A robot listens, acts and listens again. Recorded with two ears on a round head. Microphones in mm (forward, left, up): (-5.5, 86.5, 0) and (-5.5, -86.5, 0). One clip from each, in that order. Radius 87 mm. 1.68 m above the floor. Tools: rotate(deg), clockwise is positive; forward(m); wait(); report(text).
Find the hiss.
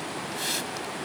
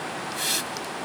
rotate(20)
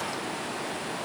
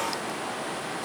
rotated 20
wait()
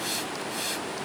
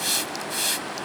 rotate(140)
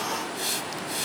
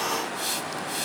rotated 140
report("Facing the hiss.")